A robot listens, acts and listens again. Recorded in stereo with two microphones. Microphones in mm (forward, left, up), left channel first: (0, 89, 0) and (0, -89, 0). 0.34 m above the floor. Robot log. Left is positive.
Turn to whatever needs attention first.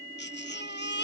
cmd yaw +90
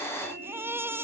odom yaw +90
note: So it is at 15° right.
cmd yaw -15
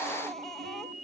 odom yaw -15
cmd idle
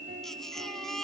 end: Facing the baby crying.